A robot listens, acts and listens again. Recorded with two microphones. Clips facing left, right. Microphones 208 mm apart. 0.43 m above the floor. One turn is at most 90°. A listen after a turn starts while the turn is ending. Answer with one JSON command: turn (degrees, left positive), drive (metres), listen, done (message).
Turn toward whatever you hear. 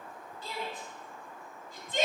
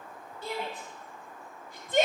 {"turn": -60}
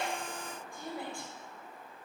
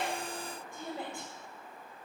{"turn": -25}
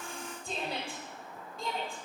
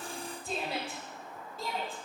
{"done": "Found it: a shout, straight ahead."}